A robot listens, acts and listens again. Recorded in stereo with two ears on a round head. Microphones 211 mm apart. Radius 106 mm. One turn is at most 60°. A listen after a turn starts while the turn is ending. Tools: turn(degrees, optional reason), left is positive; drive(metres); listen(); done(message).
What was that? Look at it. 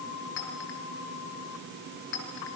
turn(degrees=55, reason="The clink: about 55° left or 125° left.")
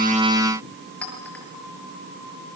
done("Found it: a clink, straight ahead.")